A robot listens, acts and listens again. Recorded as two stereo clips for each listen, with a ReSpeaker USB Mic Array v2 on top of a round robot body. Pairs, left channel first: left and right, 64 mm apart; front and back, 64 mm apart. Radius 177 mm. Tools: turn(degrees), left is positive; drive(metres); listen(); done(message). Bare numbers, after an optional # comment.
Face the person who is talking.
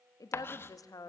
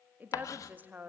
# The woman speaking: 115° left.
turn(115)
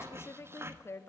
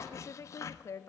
# The woman speaking is now 40° left.
turn(40)
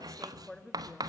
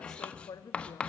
# The woman speaking is now 10° left.
turn(10)
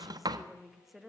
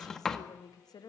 done("Found it: a woman speaking, straight ahead.")